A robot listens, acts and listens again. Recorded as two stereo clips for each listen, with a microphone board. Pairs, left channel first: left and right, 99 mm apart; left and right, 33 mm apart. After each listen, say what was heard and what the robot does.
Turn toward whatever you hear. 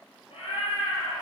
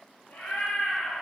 The cat meowing: about 70° left or 110° left. Turn 70° left.
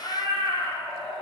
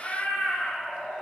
So it is at 80° left. Turn 80° left.
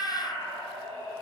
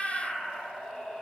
The cat meowing is now 30° left. Turn 30° left.
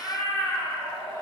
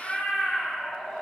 The cat meowing is now 20° left. Turn 20° left.
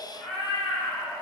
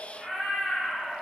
Facing the cat meowing.